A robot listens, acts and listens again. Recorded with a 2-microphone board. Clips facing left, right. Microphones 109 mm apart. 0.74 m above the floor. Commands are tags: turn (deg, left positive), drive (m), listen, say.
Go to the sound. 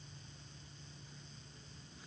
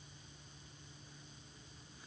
<listen/>
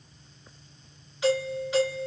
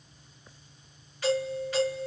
<turn deg="20"/>
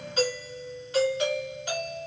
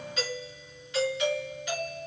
<turn deg="140"/>
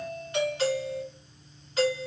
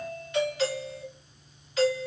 <turn deg="40"/>
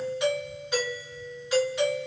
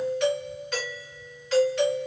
<turn deg="15"/>
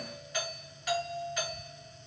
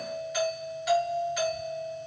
<drive m="1.0"/>
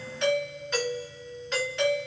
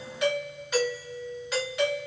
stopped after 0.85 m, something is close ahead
<turn deg="-10"/>
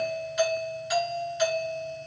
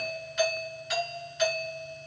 <say>I am next to the doorbell.</say>